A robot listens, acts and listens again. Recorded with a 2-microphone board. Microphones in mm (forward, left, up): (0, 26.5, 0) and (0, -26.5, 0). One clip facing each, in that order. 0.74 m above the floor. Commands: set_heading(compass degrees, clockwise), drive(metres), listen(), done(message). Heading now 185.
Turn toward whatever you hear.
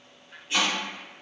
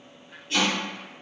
set_heading(170)
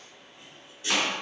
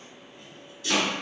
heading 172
set_heading(22)
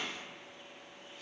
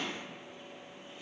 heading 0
set_heading(25)
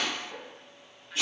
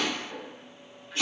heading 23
done("Facing the chopping, 1 to 2 m away.")